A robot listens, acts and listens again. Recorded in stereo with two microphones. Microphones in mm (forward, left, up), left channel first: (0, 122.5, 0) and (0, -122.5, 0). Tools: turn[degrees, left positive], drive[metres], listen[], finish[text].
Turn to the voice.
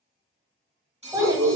Thought: The child speaking: about 15° right or 165° right.
Action: turn[-15]
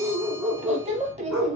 Thought: So it is at 150° right.
Action: turn[-150]
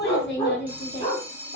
Thought: The child speaking is now 55° left.
Action: turn[55]
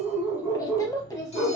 Thought: The child speaking is now 15° left.
Action: turn[15]
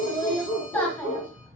Thought: The child speaking is now 10° left.
Action: turn[10]
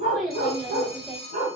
Action: finish[Found it: a child speaking, straight ahead, under 1 m away.]